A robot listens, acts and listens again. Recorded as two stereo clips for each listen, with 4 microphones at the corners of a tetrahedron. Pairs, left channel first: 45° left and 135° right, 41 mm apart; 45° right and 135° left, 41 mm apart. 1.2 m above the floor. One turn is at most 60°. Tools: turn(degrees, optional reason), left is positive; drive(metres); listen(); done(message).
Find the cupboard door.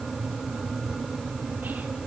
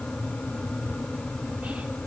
listen()
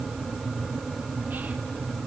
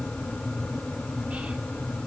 listen()
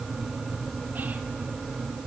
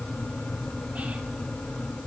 done("I can't make out a cupboard door to turn to.")